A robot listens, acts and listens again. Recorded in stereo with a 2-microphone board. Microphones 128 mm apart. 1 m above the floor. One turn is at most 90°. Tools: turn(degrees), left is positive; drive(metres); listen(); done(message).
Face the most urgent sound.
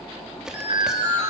turn(degrees=-40)
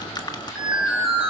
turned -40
done("Found it: an alarm, straight ahead, over 4 m away.")